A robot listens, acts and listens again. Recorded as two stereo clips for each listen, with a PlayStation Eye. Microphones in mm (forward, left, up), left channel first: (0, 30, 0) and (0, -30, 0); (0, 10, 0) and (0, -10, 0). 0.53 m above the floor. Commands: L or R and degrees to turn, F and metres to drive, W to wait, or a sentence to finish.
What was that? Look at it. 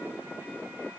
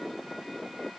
W
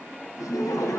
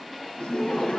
L90
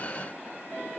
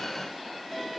W
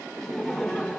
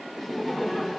Facing the laughter.